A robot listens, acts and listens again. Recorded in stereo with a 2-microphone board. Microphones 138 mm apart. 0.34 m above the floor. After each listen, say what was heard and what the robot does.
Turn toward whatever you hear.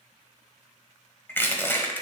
The crushing: about 15° left or 165° left. Turn 15° left.
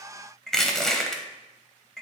Found it: crushing, straight ahead, 1 to 2 m away.